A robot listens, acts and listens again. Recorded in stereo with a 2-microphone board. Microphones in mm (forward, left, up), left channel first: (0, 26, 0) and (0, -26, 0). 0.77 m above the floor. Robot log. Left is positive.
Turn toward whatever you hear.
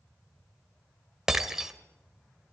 cmd yaw -30
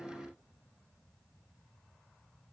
cmd idle
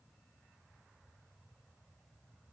end: I heard breaking glass, but can't make it out now. It was about 20° left or 140° right.